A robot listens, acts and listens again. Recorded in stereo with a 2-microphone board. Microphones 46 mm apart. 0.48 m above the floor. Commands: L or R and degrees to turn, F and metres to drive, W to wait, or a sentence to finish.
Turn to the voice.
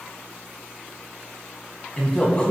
L25
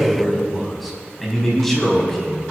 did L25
L30
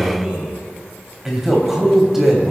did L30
Facing the man speaking, 2 to 4 m away.